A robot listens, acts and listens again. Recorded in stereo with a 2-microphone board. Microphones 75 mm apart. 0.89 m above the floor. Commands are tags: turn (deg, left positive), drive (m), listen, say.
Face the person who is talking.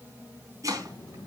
<turn deg="60"/>
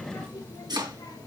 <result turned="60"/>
<turn deg="60"/>
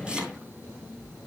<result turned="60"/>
<say>Facing the child speaking.</say>